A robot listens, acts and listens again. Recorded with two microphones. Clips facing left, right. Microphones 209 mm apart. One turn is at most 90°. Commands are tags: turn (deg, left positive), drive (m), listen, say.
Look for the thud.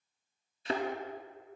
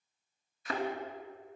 <turn deg="30"/>
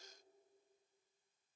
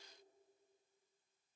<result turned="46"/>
<listen/>
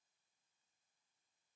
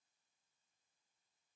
<say>I heard a thud, but can't make it out now. It was about 15° right or 105° left.</say>